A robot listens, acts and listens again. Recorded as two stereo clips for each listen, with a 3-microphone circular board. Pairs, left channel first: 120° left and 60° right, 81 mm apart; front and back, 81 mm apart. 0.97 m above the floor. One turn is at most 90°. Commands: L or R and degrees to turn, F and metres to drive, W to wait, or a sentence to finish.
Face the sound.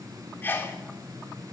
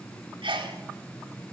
R90
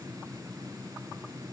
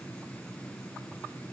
R85
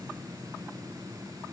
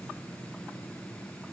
I heard a sneeze from this way, but can't make it out now.